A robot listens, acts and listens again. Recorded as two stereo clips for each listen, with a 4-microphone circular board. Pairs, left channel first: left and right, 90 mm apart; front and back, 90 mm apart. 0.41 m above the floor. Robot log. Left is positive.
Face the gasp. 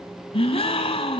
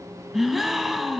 note: The gasp: 90° left.
cmd yaw +90
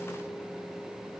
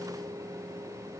end: I heard a gasp from this way, but can't make it out now.